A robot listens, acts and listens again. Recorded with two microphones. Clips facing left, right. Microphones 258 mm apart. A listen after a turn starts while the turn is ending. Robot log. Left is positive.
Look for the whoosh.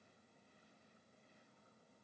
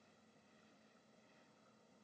cmd idle
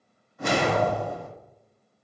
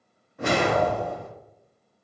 note: The whoosh: about 65° right or 115° right.
cmd yaw -65
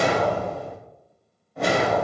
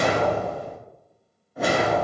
end: Facing the whoosh.